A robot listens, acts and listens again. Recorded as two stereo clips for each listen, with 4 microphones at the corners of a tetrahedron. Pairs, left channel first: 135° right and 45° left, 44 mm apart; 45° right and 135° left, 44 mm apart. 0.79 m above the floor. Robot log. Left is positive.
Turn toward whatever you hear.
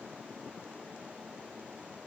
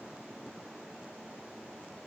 cmd idle
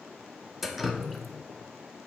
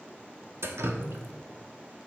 note: The dripping: 135° left.
cmd yaw +135
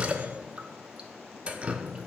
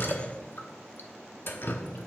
note: The dripping is now 15° right.
cmd yaw -15
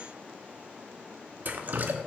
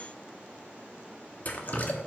end: Found it: dripping, straight ahead, under 1 m away.